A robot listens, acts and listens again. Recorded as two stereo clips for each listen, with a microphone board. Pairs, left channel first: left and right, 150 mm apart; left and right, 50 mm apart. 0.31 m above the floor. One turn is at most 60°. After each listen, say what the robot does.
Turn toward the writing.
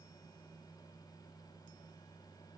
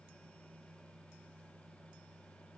Keep listening.
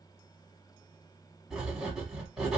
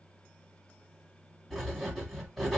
Turn 30° left.
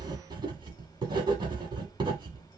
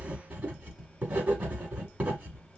Turn 35° right.
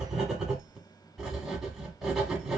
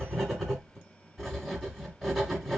Found it: writing, straight ahead, 1 to 2 m away.